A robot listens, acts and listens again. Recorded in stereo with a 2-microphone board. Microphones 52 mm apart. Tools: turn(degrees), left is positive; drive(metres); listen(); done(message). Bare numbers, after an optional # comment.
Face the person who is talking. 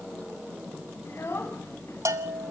# The child speaking: about 55° left or 125° left.
turn(55)
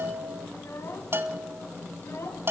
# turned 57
# So it is at 65° left.
turn(65)
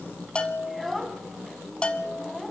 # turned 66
done("Found it: a child speaking, straight ahead, 2 to 4 m away.")